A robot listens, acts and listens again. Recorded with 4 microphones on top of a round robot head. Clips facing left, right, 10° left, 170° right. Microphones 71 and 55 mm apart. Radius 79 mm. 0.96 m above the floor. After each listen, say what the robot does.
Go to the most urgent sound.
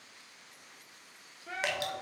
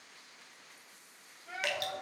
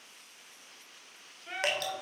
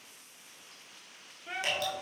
Turn 105° left.
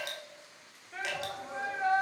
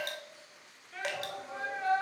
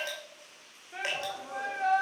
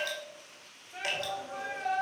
Turn 20° left.
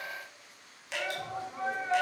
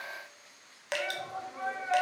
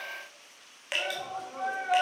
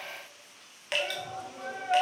Drive 1.0 m forward.
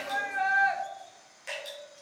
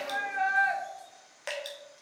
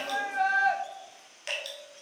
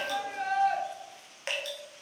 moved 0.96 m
Drive 1.0 m forward.
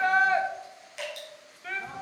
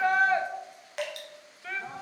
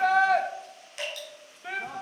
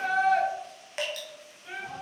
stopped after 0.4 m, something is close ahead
I am next to the shout.